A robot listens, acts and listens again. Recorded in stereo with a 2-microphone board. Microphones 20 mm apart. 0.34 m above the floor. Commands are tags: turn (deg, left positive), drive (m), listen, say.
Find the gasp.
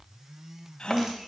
<turn deg="50"/>
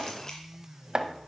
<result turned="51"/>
<listen/>
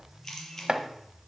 <say>I heard a gasp, but can't make it out now. It was about straight ahead or 80° left.</say>